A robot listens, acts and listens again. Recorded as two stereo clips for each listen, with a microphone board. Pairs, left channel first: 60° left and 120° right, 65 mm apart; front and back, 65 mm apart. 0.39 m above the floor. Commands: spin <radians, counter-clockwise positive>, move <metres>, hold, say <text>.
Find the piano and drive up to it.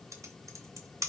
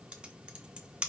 hold
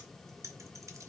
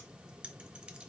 hold
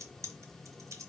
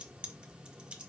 say I can't make out a piano to turn to.